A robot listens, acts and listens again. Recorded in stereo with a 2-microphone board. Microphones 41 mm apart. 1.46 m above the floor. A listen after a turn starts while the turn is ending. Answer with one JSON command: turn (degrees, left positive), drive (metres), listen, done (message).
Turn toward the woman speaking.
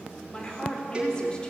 {"turn": 20}
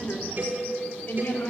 {"turn": 130}
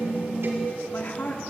{"turn": 40}
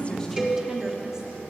{"listen": true}
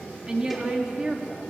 {"turn": -20}
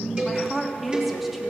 {"done": "Facing the woman speaking."}